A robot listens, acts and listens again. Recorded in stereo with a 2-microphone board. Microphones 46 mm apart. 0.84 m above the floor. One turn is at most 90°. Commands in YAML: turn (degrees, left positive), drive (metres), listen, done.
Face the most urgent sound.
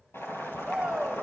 turn: -30
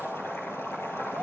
listen: true
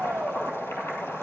turn: -90
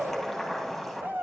turn: -60
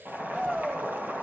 turn: -10
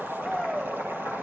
done: "Facing the shout."